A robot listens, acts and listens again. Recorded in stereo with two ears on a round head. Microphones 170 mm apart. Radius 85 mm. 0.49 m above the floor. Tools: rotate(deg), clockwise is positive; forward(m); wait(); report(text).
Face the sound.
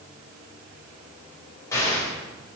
rotate(-15)
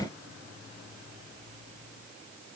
wait()
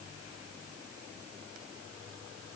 report("I heard an explosion, but can't make it out now. It was about straight ahead or 150° left.")